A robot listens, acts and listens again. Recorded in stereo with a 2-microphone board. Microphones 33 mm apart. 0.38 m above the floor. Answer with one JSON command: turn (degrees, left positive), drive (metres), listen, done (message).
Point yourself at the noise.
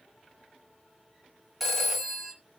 {"turn": 30}
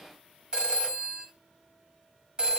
{"turn": -30}
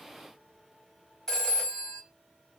{"turn": 20}
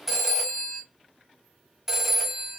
{"done": "Found it: a phone ringing, straight ahead, 1 to 2 m away."}